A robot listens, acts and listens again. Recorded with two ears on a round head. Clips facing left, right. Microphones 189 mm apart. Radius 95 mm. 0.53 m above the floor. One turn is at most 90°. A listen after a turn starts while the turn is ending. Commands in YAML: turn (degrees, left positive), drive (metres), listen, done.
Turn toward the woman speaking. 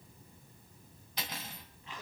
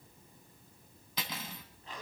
listen: true
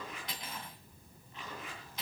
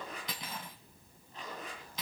listen: true
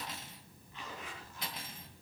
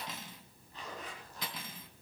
done: "I can't make out a woman speaking to turn to."